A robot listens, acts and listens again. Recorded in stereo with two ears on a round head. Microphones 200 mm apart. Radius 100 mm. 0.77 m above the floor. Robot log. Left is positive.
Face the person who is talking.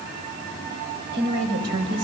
note: The woman speaking: about 55° right or 125° right.
cmd yaw -55
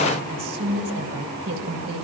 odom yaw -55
note: So it is at 65° right.
cmd yaw -65
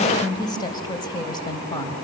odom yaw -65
note: The woman speaking is now 20° left.
cmd yaw +20
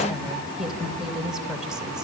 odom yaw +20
end: Facing the woman speaking, over 4 m away.